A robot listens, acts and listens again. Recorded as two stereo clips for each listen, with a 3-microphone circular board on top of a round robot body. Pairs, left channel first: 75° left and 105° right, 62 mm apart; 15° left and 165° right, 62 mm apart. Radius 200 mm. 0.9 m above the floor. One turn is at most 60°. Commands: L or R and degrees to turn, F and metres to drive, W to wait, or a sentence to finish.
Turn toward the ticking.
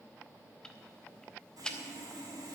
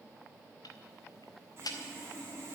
Facing the ticking, under 1 m away.